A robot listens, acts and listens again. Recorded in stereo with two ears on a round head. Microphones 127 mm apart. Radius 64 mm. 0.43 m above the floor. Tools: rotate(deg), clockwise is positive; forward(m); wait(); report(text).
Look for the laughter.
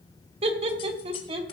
rotate(40)
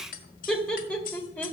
rotate(-15)
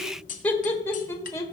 rotate(-20)
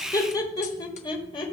rotate(-35)
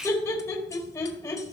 rotate(-20)
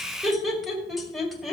report("Found it: laughter, straight ahead.")